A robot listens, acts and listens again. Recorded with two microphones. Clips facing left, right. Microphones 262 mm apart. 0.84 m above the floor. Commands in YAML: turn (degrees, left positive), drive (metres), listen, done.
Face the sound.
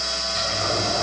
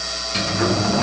turn: -90
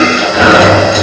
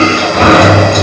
done: "Facing the sliding door, over 4 m away."